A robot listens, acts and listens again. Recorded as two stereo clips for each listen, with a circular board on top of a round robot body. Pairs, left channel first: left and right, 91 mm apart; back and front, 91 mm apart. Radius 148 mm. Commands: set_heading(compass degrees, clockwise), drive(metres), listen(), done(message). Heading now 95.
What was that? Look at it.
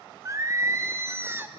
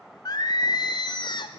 set_heading(250)
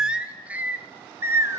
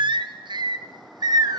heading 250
set_heading(285)
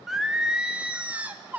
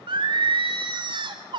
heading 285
set_heading(305)
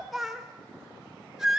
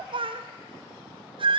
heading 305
done("Facing the singing.")